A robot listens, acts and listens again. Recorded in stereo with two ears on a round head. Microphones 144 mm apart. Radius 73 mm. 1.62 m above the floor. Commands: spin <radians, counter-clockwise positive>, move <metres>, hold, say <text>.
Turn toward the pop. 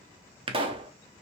spin -0.61
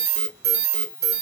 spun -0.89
hold
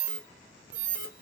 say I heard a pop, but can't make it out now. It was about 15° left or 95° right.